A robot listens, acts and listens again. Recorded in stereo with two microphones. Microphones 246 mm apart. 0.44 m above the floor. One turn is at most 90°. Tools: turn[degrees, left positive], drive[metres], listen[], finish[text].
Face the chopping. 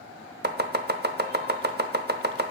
Thought: The chopping: about 40° right or 140° right.
Action: turn[-40]
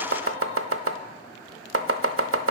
Thought: So it is at 90° right.
Action: turn[-90]
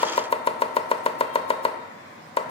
Thought: The chopping is now 25° left.
Action: turn[25]
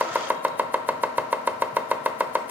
Thought: The chopping is now 10° right.
Action: turn[-10]
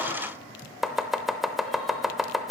Action: finish[Facing the chopping.]